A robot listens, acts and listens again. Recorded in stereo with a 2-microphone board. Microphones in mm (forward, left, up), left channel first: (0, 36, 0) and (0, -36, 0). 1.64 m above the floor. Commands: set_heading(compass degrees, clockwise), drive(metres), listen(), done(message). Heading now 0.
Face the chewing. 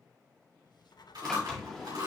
set_heading(70)
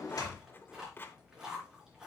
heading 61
set_heading(71)
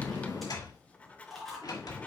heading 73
done("Found it: chewing, straight ahead, 2 to 4 m away.")